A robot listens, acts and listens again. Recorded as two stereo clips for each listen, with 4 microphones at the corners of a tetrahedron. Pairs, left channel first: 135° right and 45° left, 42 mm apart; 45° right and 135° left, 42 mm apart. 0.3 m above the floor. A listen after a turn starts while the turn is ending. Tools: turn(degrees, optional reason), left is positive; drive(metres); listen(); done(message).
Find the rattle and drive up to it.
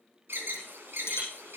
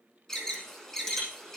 turn(degrees=-125, reason="The rattle: 125° right.")
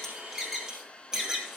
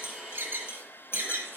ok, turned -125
turn(degrees=-25, reason="The rattle is now 25° right.")
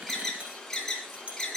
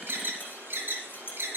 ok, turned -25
turn(degrees=-10, reason="The rattle is now 10° right.")
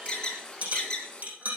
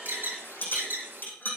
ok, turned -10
drive(metres=1.0)
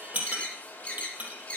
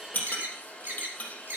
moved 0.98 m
drive(metres=1.0)
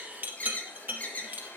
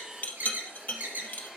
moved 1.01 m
drive(metres=1.0)
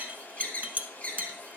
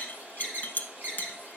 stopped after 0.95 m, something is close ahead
done("Arrived at the rattle, straight ahead.")